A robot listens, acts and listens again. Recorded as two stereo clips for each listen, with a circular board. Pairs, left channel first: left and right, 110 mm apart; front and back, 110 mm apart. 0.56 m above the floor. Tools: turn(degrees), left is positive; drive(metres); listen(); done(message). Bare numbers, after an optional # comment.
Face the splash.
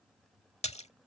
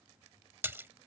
# The splash: 110° left.
turn(110)
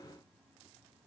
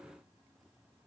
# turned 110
done("Facing where the splash came from. I can't hear it now.")